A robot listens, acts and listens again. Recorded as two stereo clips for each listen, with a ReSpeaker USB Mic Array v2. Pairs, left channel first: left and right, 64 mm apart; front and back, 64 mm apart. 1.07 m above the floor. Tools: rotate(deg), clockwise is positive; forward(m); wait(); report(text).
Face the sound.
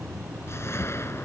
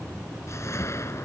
rotate(-45)
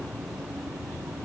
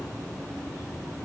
wait()
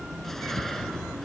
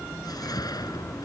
report("Found it: a whoosh, straight ahead.")